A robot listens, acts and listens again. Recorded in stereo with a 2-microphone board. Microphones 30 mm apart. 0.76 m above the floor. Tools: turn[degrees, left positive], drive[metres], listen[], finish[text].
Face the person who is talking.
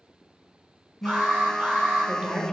Thought: The woman speaking: about 30° right or 150° right.
Action: turn[-30]
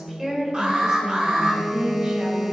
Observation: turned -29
Thought: The woman speaking: about 20° right or 160° right.
Action: turn[-20]
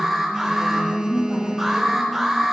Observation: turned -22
Thought: So it is at 10° right.
Action: turn[-10]
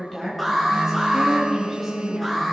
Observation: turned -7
Action: finish[Facing the woman speaking.]